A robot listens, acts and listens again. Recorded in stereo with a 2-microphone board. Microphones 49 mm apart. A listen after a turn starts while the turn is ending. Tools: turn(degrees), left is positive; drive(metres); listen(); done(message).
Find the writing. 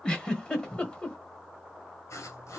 turn(degrees=90)
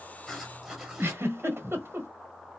turn(degrees=-10)
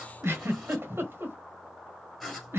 done("Found it: writing, straight ahead.")